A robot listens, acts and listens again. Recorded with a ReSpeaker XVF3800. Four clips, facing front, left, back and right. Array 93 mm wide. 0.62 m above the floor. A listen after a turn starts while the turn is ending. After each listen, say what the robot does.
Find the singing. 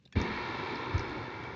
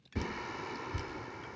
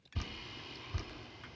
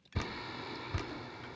Turn 15° left.
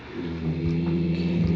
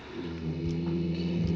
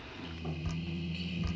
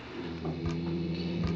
Facing the singing, under 1 m away.